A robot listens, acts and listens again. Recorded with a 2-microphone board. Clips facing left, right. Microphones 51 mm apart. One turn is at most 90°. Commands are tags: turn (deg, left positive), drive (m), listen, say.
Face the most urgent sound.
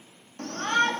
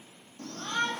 <turn deg="60"/>
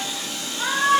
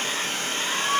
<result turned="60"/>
<turn deg="60"/>
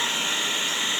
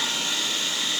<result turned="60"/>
<listen/>
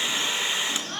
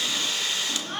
<turn deg="-10"/>
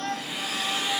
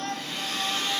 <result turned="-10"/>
<say>Found it: a shout, straight ahead.</say>